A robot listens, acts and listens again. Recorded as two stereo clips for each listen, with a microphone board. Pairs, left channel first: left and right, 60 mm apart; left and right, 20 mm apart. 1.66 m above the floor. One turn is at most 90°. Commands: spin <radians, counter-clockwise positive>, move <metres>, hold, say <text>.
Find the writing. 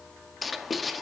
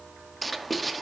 spin 0.52
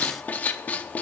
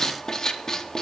spin 1.57
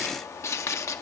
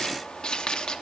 spin 0.96
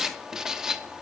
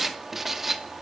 spin -0.17
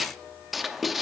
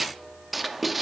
say Found it: writing, straight ahead, under 1 m away.